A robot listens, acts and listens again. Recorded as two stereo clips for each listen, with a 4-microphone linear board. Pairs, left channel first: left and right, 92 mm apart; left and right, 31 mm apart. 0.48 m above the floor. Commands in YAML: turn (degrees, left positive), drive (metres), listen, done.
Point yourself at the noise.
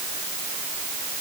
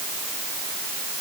listen: true
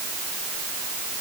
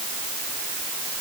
listen: true
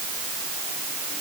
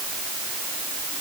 done: "I can't make out anything to turn to."